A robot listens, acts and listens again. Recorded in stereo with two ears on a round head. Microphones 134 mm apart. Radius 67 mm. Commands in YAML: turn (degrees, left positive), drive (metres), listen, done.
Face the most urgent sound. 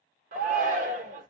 turn: -55
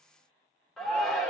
done: "Facing the shout, 1 to 2 m away."